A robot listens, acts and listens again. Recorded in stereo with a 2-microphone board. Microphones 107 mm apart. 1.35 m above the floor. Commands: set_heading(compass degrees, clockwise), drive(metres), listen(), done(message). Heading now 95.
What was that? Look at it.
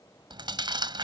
set_heading(140)
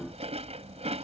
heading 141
set_heading(231)
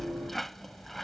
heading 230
done("Found it: chewing, straight ahead.")